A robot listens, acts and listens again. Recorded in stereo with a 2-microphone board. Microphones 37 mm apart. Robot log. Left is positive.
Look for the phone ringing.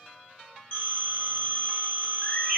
note: The phone ringing: about 40° left or 140° left.
cmd yaw +40
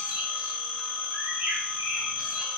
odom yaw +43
note: So it is at 100° left.
cmd yaw +100
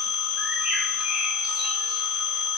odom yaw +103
end: Facing the phone ringing, 1 to 2 m away.